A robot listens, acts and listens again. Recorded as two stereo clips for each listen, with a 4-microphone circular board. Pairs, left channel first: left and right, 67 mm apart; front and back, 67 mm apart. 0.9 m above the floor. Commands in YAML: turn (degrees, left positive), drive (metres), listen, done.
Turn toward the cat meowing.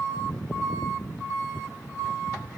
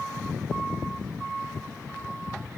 listen: true
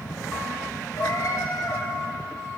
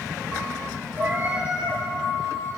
turn: 120
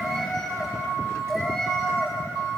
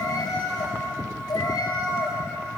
done: "Found it: a cat meowing, straight ahead."